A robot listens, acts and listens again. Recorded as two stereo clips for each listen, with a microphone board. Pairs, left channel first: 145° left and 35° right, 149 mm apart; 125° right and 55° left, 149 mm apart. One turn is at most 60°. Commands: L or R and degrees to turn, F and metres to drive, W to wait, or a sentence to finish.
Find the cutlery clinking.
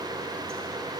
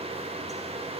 W
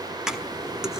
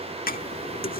R60
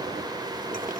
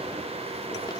R60
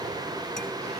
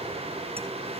W
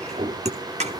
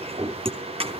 Found it: cutlery clinking, straight ahead, under 1 m away.